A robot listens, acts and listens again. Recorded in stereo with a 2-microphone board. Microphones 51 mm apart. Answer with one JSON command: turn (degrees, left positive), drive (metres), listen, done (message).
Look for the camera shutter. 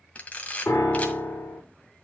{"turn": 30}
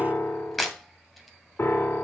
{"done": "Facing the camera shutter, 1 to 2 m away."}